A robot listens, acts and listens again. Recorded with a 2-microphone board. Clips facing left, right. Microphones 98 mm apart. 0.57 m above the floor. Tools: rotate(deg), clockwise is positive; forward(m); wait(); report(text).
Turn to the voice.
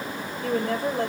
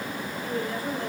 rotate(-70)
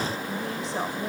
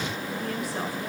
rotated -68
rotate(-25)
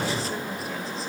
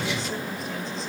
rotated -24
wait()
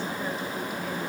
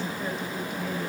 report("Facing the woman speaking.")